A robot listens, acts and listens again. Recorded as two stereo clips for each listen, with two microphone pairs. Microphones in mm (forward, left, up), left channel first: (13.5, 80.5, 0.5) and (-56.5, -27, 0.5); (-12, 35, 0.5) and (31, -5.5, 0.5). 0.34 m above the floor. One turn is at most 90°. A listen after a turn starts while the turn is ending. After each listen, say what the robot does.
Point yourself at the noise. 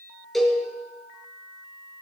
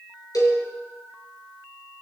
Turn 90° left.
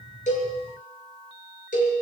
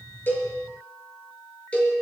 Turn 70° left.
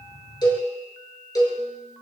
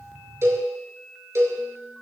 Facing the cowbell, over 4 m away.